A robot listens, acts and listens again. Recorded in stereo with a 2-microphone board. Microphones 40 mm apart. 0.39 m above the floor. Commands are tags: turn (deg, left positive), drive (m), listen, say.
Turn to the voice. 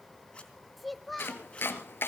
<turn deg="30"/>
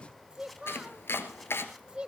<turn deg="-30"/>
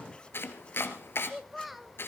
<say>Facing the child speaking.</say>